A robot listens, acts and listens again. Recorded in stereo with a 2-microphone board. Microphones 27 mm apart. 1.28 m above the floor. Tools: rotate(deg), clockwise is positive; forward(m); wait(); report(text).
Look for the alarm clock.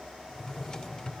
wait()
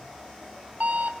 rotate(55)
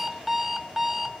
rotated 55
report("Found it: an alarm clock, straight ahead.")